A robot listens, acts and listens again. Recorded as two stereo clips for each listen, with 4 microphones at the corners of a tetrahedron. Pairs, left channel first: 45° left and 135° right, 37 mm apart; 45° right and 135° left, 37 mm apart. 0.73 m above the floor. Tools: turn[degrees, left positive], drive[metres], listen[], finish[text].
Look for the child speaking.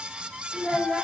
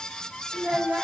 Thought: The child speaking: 150° left.
Action: turn[150]
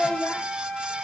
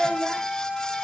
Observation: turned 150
Thought: The child speaking is now 45° left.
Action: turn[45]
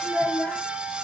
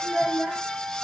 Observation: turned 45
Action: finish[Facing the child speaking.]